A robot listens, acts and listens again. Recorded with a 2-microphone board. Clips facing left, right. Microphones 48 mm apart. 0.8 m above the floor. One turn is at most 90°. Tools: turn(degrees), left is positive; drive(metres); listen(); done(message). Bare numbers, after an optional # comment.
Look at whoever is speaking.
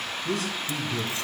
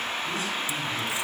# The man speaking: about 70° left or 110° left.
turn(70)
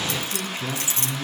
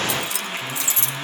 # So it is at 40° left.
turn(40)
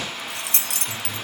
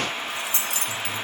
# The man speaking is now 10° right.
turn(-10)
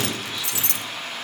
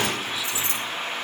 listen()
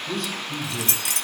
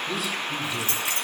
done("Facing the man speaking, 2 to 4 m away.")